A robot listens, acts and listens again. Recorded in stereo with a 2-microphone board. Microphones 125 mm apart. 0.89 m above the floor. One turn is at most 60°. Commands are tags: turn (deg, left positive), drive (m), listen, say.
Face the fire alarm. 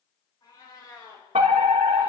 <turn deg="-60"/>
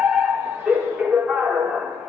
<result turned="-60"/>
<say>Found it: a fire alarm, straight ahead, 2 to 4 m away.</say>